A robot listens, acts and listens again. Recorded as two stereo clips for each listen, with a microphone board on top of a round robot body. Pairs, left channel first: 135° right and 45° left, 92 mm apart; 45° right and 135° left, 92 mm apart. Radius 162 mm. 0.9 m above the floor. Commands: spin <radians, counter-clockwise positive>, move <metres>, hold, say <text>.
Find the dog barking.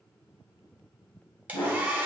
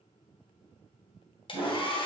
spin -2.97
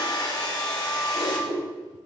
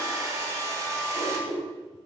spin 0.35
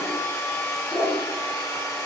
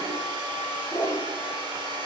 say Facing the dog barking.